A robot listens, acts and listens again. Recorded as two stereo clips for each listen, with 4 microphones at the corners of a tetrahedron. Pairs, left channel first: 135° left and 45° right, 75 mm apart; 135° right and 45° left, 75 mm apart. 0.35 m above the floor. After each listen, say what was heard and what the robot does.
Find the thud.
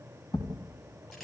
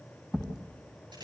The thud: 125° left. Turn 125° left.
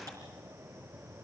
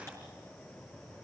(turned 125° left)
I heard a thud from this way, but can't make it out now.